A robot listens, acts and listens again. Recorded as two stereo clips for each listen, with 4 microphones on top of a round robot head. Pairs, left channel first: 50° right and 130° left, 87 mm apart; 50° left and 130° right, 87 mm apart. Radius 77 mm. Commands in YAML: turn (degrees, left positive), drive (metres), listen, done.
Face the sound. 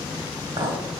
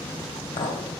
turn: 80
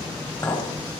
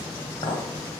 turn: 10
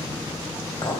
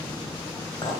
done: "Facing the clink."